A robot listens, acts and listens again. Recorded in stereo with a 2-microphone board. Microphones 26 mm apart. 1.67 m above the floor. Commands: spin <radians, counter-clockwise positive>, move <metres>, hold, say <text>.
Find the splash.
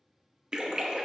spin -0.52
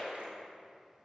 spin -2.18
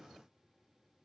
say I heard a splash from this way, but can't make it out now.